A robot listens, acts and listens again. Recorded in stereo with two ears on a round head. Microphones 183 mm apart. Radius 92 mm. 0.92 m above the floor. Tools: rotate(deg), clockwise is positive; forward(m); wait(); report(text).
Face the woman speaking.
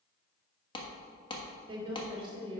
rotate(25)
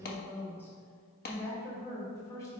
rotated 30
rotate(-15)
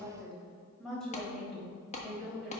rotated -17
report("Found it: a woman speaking, straight ahead, over 4 m away.")